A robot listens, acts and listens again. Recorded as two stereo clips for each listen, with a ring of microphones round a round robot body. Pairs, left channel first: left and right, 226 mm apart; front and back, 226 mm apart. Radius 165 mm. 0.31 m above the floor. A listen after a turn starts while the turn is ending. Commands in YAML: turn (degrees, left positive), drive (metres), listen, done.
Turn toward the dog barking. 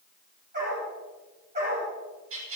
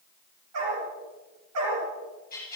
turn: -160
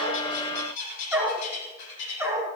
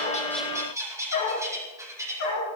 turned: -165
turn: -15
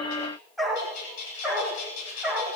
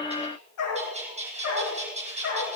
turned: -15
done: "Facing the dog barking."